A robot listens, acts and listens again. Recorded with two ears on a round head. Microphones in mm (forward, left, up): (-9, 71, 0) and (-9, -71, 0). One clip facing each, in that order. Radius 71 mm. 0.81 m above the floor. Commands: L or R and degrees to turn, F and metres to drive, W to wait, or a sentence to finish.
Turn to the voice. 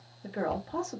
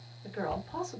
L50
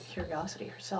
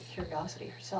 L75
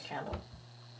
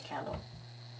L10
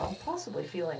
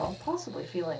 Found it: a woman speaking, straight ahead, 1 to 2 m away.